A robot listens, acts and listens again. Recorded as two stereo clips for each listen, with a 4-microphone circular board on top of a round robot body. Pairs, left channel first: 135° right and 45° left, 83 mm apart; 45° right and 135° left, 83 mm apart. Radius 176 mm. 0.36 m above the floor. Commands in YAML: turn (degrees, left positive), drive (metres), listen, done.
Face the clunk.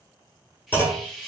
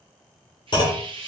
turn: -70
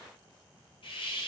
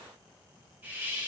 done: "Facing where the clunk came from. I can't hear it now."